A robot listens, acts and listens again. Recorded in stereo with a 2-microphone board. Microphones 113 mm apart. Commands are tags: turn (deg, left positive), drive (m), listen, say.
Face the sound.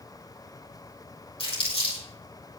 <turn deg="50"/>
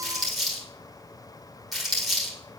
<say>Found it: crumpling, straight ahead, over 4 m away.</say>